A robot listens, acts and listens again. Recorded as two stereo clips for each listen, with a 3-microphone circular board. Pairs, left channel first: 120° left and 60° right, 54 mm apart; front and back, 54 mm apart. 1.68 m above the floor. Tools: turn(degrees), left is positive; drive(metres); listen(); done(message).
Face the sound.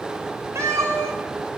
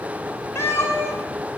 turn(degrees=-35)
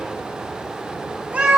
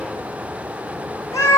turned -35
done("Found it: a cat meowing, straight ahead, over 4 m away.")